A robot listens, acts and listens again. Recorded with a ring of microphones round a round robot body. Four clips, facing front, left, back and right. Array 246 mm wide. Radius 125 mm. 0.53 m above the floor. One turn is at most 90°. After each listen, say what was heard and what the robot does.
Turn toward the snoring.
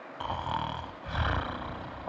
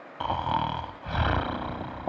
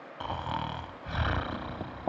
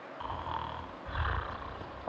The snoring: 95° left. Turn 90° left.
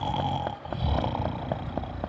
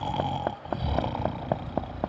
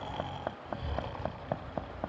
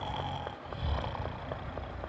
The snoring is now 40° left. Turn 40° left.
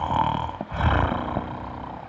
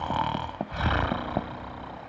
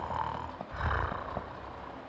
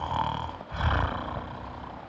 The snoring is now 15° left. Turn 15° left.
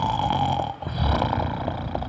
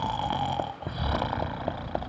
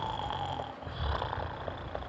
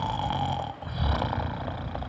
Found it: snoring, straight ahead.